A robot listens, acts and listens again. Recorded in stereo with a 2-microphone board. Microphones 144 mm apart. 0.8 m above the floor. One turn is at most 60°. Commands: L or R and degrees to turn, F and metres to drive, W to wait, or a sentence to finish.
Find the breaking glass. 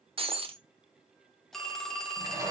R40
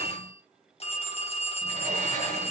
W
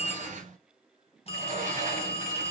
I heard breaking glass, but can't make it out now. It was about straight ahead or 100° right.